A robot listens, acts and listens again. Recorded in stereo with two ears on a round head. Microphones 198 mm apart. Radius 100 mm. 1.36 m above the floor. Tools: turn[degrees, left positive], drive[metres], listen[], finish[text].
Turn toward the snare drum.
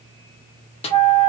Thought: The snare drum: about 25° left or 155° left.
Action: turn[25]
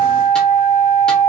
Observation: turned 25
Action: listen[]
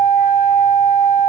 Action: listen[]
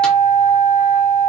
Action: finish[I heard a snare drum, but can't make it out now. It was about straight ahead or 130° left.]